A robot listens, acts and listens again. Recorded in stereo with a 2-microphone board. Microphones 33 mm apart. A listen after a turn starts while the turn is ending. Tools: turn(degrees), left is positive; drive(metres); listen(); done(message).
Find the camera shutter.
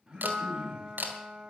turn(degrees=-65)
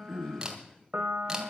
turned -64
listen()
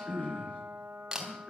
turn(degrees=-20)
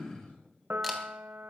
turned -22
listen()
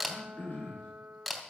done("Facing the camera shutter.")